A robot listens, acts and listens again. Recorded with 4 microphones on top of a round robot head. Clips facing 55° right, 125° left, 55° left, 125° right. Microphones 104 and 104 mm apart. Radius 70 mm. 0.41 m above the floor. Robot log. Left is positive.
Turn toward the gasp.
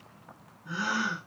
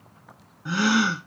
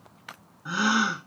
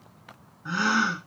note: The gasp: 135° left.
cmd yaw +135
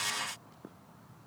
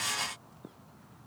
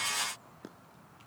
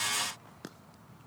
end: Facing where the gasp came from. I can't hear it now.